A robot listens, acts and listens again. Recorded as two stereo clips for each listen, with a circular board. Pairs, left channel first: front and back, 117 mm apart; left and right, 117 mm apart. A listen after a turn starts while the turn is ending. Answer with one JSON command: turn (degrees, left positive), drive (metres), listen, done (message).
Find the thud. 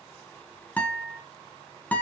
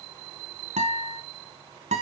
{"listen": true}
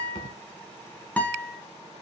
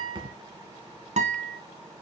{"turn": -40}
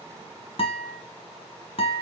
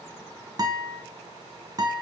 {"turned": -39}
{"done": "Facing where the thud came from. I can't hear it now."}